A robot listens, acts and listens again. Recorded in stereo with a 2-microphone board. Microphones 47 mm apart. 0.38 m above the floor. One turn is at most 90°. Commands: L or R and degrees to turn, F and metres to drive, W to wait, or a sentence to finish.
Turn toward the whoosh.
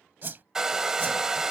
R45
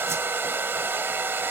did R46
W
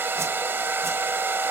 W
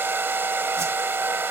I heard a whoosh, but can't make it out now. It was about straight ahead or 90° right.